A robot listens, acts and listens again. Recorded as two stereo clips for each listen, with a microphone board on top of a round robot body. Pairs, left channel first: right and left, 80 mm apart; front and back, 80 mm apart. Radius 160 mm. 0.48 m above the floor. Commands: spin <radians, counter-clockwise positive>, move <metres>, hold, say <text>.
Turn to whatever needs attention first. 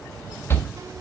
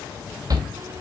spin -2.53
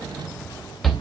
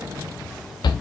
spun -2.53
say Facing the shout.